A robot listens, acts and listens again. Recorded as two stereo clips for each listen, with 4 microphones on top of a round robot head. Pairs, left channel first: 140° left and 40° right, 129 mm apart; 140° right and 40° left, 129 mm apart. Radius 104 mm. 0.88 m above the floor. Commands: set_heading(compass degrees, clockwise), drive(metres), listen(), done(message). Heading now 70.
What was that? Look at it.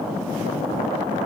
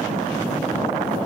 listen()
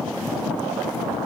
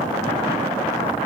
listen()
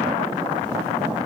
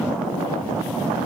done("I can't make out anything to turn to.")